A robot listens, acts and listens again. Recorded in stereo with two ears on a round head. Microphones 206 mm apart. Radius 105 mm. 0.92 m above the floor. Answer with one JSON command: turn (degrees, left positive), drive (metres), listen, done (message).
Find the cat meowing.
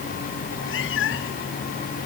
{"turn": 60}
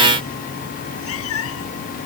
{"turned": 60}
{"turn": 60}
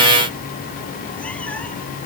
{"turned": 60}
{"listen": true}
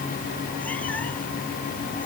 {"listen": true}
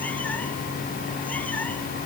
{"done": "I heard a cat meowing from this way, but can't make it out now."}